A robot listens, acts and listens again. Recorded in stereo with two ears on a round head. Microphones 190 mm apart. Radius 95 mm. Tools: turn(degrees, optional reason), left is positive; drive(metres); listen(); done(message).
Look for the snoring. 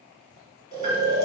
turn(degrees=-20, reason="The snoring: about 20° right or 160° right.")
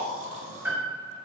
turn(degrees=-135, reason="So it is at 135° right.")
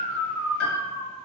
turn(degrees=-25, reason="The snoring is now 25° right.")
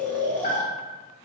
turn(degrees=10, reason="The snoring is now 10° left.")
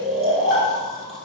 done("Found it: snoring, straight ahead, under 1 m away.")